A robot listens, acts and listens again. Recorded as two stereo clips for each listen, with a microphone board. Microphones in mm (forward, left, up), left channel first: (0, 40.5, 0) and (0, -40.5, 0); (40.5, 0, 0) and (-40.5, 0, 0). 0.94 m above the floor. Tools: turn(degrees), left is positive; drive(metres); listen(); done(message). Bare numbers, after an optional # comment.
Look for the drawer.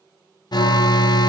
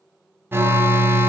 listen()
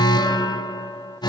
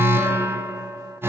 listen()
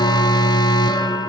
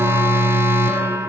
done("I can't make out a drawer, only an alarm.")